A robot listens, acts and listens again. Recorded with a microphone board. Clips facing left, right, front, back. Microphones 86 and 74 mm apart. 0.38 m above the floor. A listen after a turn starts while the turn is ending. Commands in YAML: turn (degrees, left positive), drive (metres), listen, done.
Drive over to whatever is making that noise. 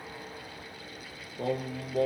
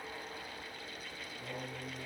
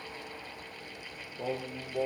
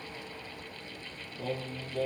turn: 70
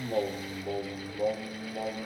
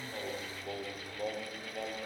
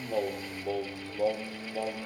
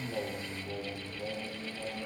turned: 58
turn: 15
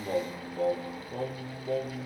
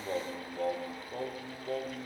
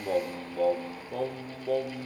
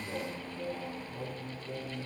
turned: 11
drive: 1.0
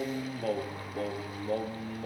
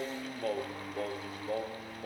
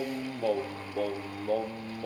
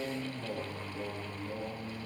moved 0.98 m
drive: 1.0
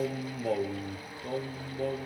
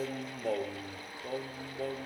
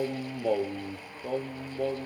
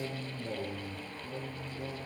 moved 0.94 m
drive: 1.0
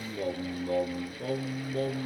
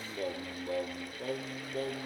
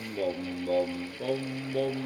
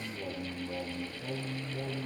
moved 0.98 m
drive: 1.0
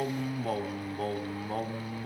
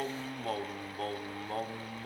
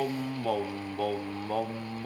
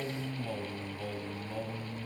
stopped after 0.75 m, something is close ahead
done: "Arrived at the singing, straight ahead."